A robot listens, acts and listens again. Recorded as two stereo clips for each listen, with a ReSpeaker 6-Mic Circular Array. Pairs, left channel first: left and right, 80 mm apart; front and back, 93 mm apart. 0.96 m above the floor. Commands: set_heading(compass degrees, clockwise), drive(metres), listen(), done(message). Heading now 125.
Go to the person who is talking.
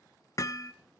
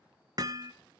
listen()
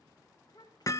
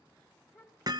set_heading(65)
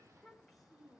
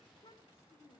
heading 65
drive(1.0)
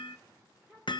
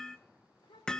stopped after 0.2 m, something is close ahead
done("Something is in my way. I am facing the child speaking but have not reached it.")